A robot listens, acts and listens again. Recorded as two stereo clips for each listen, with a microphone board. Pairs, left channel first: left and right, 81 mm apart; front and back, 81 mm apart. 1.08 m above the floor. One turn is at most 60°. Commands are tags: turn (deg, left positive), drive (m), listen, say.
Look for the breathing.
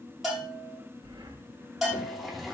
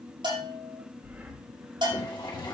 <turn deg="-60"/>
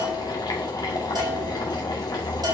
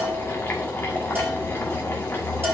<turn deg="-50"/>
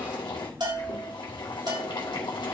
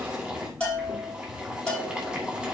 <listen/>
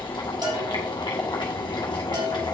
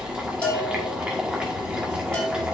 <say>Facing where the breathing came from. I can't hear it now.</say>